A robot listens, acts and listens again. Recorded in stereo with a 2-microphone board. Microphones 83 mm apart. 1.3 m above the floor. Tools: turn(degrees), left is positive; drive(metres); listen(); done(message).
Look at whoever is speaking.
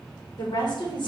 turn(degrees=65)
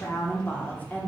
turn(degrees=20)
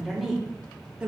turn(degrees=-15)
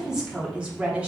turn(degrees=-15)
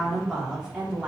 turn(degrees=-10)
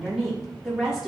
done("Found it: a woman speaking, straight ahead.")